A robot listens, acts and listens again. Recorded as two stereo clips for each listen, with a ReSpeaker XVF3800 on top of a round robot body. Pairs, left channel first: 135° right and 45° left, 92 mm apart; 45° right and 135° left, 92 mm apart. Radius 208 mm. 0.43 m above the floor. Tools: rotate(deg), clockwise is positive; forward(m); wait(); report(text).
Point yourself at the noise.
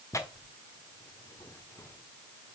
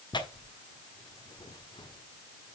rotate(80)
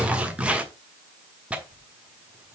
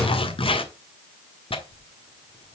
rotate(35)
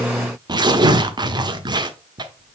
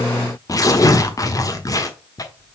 report("Facing the tearing paper, 1 to 2 m away.")